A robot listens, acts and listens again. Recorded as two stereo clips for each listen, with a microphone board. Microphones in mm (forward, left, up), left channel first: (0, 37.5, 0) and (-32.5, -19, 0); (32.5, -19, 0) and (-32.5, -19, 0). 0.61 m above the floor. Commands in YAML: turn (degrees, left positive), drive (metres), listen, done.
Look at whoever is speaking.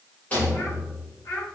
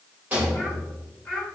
turn: 75
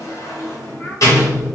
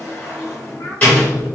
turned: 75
listen: true
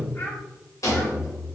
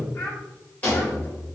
listen: true
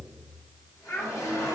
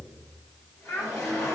turn: 15
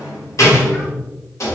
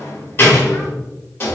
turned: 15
listen: true
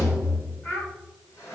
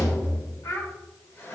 done: "Facing the child speaking."